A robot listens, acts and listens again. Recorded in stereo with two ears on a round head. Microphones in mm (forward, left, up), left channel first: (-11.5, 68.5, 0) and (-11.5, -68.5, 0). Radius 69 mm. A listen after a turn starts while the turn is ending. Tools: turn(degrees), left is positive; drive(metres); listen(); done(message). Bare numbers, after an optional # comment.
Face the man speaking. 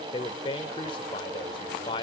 # The man speaking: about 35° left or 145° left.
turn(35)
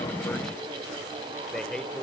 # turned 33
done("Found it: a man speaking, straight ahead.")